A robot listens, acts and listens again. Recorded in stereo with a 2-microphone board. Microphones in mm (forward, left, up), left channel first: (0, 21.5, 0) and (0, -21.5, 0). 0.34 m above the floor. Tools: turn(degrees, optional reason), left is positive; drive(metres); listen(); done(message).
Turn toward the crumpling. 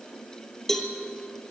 listen()
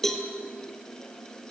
listen()
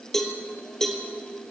done("I can't make out crumpling to turn to.")